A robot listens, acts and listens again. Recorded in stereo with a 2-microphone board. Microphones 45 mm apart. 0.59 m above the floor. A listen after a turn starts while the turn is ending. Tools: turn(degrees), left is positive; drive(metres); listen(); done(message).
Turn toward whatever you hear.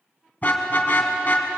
turn(degrees=35)
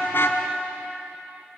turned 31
listen()
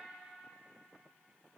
listen()
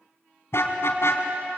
turn(degrees=115)
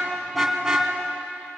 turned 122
turn(degrees=-10)
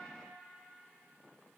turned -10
listen()
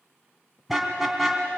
done("Facing the car horn, 2 to 4 m away.")